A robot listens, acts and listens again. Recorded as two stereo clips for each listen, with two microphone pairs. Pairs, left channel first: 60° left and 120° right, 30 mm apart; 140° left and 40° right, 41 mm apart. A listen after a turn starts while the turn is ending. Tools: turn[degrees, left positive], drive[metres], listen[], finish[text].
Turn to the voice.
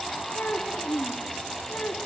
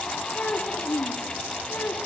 Thought: The child speaking: 95° left.
Action: turn[95]
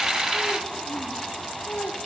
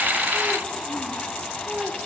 Thought: The child speaking is now 25° left.
Action: turn[25]
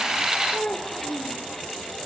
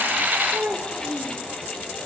Action: finish[Found it: a child speaking, straight ahead.]